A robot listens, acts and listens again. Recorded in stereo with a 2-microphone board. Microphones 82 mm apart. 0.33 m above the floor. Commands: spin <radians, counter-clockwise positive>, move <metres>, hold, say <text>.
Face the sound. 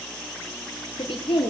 spin 1.57
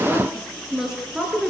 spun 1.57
spin -0.17
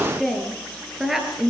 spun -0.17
say Found it: a woman speaking, straight ahead, over 4 m away.